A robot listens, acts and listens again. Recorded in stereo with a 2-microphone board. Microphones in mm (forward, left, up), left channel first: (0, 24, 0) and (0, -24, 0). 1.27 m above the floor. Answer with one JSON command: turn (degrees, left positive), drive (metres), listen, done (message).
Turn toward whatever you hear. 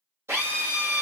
{"turn": -90}
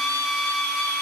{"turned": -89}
{"turn": -10}
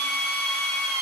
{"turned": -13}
{"done": "Facing the drill."}